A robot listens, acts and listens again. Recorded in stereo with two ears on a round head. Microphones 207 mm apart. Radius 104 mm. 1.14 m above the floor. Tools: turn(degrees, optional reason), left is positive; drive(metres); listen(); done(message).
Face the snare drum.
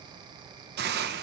listen()
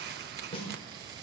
turn(degrees=25, reason="The snare drum: about 25° left or 155° left.")
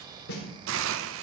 turn(degrees=130, reason="So it is at 130° left.")
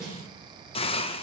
done("Found it: a snare drum, straight ahead, over 4 m away.")